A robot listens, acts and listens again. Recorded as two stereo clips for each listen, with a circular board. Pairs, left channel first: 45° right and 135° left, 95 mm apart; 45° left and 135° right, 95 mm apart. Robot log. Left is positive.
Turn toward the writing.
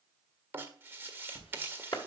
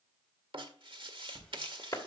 note: The writing: 160° right.
cmd yaw -160
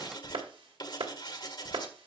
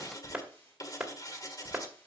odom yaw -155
end: Found it: writing, straight ahead, 1 to 2 m away.